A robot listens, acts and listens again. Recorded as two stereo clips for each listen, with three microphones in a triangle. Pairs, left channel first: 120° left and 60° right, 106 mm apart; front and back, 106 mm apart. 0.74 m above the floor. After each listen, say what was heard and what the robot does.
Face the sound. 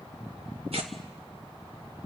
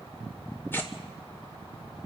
The tearing paper: 70° right. Turn 70° right.
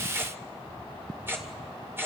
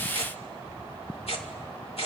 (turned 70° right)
Facing the tearing paper, 2 to 4 m away.